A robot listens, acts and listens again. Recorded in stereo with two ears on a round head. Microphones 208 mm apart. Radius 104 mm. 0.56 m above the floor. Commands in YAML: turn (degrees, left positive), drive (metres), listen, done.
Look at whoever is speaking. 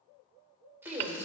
turn: 30
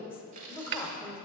turn: 155
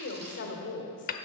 turn: 65
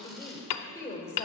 turn: 15
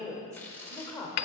done: "Facing the woman speaking, 1 to 2 m away."